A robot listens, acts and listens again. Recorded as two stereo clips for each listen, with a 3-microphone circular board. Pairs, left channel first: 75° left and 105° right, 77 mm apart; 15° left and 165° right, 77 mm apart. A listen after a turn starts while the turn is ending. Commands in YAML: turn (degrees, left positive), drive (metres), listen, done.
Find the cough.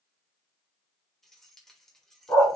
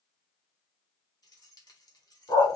listen: true
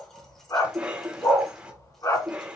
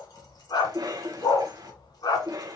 turn: 180
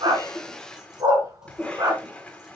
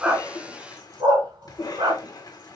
done: "Facing the cough."